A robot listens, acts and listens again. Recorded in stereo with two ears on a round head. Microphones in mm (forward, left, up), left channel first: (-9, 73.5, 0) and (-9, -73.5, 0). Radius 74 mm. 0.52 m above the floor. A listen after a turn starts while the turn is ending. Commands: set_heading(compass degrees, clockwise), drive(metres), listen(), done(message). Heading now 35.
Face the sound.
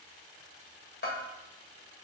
set_heading(340)
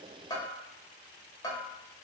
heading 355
set_heading(330)
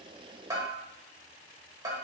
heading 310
set_heading(330)
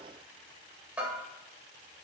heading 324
set_heading(334)
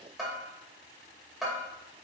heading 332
done("Found it: a bell, straight ahead, 1 to 2 m away.")